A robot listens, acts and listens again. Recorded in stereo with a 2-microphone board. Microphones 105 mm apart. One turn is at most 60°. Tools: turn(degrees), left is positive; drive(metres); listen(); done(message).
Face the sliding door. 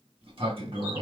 turn(degrees=-60)
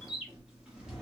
turn(degrees=-10)
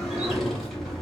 done("Facing the sliding door, 1 to 2 m away.")